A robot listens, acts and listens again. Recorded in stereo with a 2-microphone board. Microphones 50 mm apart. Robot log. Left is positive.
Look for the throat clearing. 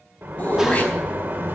note: The throat clearing: about 25° left or 155° left.
cmd yaw +25
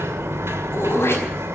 note: So it is at 130° left.
cmd yaw +130
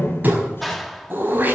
note: The throat clearing is now 40° right.
cmd yaw -40
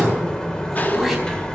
end: Facing the throat clearing.